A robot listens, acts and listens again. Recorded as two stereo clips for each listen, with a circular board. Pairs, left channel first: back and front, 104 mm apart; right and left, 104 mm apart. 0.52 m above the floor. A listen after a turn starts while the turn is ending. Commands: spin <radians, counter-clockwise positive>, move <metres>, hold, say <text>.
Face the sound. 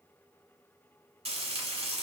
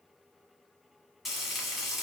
say Facing the frying.